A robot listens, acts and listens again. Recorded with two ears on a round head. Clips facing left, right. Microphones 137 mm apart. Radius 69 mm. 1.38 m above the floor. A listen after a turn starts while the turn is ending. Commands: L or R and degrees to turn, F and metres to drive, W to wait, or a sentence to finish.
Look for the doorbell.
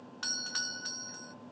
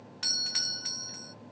R15
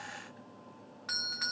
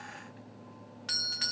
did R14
R150
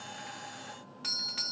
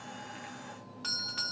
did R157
L10
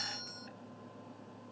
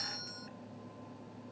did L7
Facing the doorbell.